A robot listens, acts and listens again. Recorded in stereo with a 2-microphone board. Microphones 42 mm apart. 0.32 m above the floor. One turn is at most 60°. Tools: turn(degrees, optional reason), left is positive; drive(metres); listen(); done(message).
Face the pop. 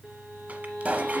turn(degrees=-35, reason="The pop: about 35° right or 145° right.")
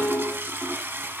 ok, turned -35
listen()
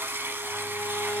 done("I heard a pop, but can't make it out now. It was about straight ahead or 110° right.")